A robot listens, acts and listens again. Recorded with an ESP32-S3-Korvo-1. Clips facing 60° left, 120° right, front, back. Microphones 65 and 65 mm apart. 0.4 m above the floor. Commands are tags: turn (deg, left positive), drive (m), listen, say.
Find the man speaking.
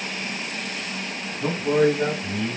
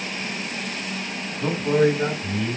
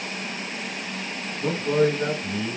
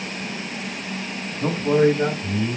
<turn deg="155"/>
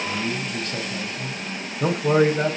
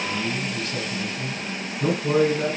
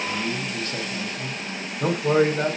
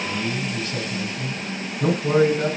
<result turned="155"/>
<turn deg="50"/>
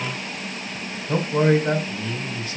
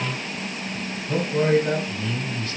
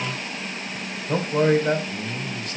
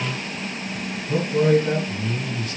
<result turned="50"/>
<say>Found it: a man speaking, straight ahead, 2 to 4 m away.</say>